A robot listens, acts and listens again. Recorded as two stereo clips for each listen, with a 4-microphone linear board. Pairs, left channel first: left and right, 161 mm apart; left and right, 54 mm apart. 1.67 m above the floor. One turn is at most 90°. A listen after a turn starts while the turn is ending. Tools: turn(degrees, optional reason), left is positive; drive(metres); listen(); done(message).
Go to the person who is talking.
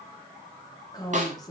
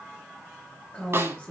turn(degrees=25, reason="The woman speaking: about 25° left or 155° left.")
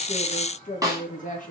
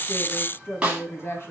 turn(degrees=90, reason="So it is at 125° left.")
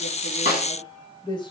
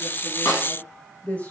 turn(degrees=30, reason="The woman speaking is now 30° left.")
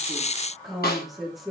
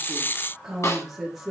drive(metres=1.0)
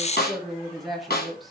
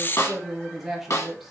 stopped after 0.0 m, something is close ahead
done("Blocked. The woman speaking is further on, straight ahead.")